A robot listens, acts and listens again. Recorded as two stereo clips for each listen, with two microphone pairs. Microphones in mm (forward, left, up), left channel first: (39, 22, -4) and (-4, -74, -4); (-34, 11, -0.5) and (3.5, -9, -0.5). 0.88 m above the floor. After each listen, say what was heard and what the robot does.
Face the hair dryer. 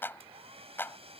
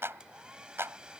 The hair dryer: 95° right. Turn 95° right.
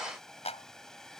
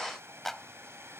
The hair dryer is now 20° right. Turn 20° right.
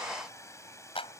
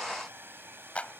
Facing the hair dryer.